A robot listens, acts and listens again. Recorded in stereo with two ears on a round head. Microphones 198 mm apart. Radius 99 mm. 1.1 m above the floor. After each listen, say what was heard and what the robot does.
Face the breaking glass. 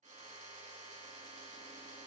Keep listening.
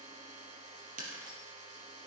The breaking glass: about 40° right or 140° right. Turn 40° right.
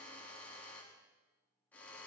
Keep listening.
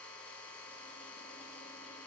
I heard breaking glass, but can't make it out now. It was about straight ahead or 100° right.